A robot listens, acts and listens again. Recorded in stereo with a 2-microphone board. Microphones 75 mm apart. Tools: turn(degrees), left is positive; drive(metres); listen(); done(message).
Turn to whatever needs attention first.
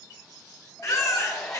turn(degrees=45)
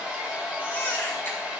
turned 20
turn(degrees=30)
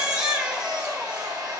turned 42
turn(degrees=-10)
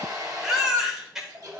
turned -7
done("Facing the baby crying.")